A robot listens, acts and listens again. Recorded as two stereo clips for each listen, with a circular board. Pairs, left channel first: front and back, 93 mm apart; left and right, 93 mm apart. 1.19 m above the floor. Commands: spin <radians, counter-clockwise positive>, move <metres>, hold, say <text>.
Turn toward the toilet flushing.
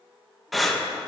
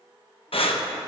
hold
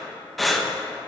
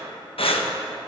hold
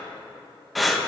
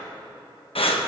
say I can't make out a toilet flushing, only breathing.